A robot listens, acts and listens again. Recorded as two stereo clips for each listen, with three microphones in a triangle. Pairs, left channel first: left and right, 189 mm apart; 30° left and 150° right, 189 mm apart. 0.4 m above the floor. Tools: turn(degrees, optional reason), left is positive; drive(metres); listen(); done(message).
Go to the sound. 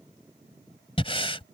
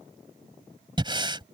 turn(degrees=150, reason="The breathing: 150° left.")
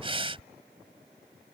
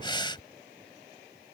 turn(degrees=-35, reason="The breathing is now 35° right.")
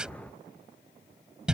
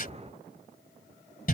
drive(metres=1.0)
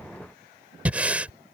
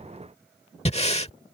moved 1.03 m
turn(degrees=-10, reason="The breathing is now 10° right.")
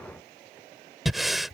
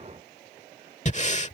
drive(metres=1.0)
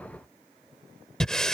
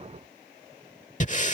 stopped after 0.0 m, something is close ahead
done("I am next to the breathing.")